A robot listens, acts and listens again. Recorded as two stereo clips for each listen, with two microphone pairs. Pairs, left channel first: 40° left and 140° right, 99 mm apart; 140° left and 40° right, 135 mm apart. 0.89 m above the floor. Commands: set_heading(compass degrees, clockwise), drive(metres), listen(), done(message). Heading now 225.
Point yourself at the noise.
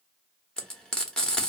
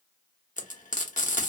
set_heading(105)
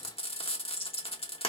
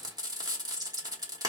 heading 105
set_heading(90)
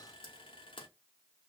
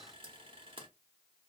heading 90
done("Facing the frying, under 1 m away.")